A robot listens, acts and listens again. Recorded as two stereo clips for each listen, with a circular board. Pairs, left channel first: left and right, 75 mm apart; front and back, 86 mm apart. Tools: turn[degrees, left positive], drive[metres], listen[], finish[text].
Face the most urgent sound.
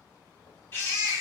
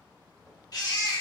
Thought: The baby crying: 35° left.
Action: turn[35]
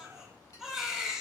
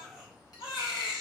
Action: finish[Found it: a baby crying, straight ahead.]